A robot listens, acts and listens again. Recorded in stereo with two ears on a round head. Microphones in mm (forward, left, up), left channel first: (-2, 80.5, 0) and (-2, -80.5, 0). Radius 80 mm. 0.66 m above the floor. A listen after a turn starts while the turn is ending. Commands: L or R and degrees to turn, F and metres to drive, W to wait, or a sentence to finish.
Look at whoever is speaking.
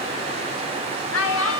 L90
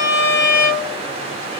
W
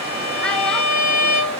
W
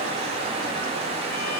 I heard a child speaking from this way, but can't make it out now.